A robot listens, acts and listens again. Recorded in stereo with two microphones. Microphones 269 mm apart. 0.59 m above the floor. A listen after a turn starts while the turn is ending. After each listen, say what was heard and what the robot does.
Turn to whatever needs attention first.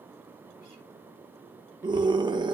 The scream: about 15° right or 165° right. Turn 15° right.
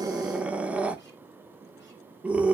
Facing the scream.